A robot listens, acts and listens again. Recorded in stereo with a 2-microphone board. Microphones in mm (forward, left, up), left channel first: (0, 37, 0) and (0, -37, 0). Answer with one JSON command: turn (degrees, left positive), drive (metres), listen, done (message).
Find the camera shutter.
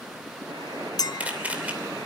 {"turn": -20}
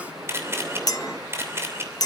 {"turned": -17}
{"turn": -145}
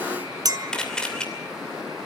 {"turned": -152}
{"turn": 10}
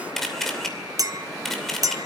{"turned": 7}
{"done": "Facing the camera shutter."}